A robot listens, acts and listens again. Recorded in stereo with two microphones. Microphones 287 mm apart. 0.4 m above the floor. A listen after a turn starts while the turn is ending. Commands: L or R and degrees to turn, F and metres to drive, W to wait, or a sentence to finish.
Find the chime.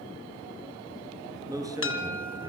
L45
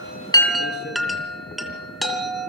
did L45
Found it: a chime, straight ahead, 2 to 4 m away.